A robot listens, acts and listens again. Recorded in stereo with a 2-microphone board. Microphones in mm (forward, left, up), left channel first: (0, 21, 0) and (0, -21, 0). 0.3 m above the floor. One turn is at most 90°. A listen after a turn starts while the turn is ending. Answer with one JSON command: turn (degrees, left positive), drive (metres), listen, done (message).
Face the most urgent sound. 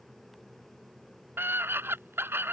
{"turn": -65}
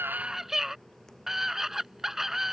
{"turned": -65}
{"turn": -10}
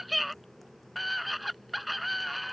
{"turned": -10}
{"done": "Found it: a scream, straight ahead."}